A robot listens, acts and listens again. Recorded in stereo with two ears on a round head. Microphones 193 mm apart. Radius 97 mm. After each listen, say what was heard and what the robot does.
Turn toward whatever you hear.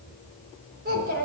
The child speaking: about 50° right or 130° right. Turn 50° right.
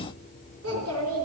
So it is at 75° right. Turn 75° right.
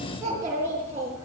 The child speaking is now 15° right. Turn 15° right.
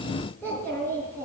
The child speaking is now 10° left. Turn 10° left.
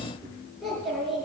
Found it: a child speaking, straight ahead, over 4 m away.